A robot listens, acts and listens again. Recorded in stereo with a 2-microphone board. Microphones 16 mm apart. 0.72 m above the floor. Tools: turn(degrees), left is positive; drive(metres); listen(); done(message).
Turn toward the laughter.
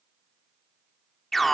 listen()
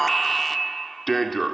listen()
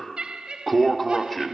turn(degrees=-75)
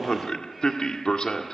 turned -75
listen()
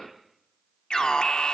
listen()
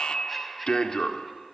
done("Found it: laughter, straight ahead, over 4 m away.")